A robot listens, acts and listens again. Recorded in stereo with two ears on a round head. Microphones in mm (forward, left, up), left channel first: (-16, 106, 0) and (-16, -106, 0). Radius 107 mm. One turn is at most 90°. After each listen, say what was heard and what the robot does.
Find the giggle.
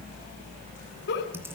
The giggle: about 45° left or 135° left. Turn 45° left.
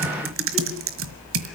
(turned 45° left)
Keep listening.
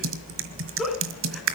Found it: a giggle, straight ahead, 2 to 4 m away.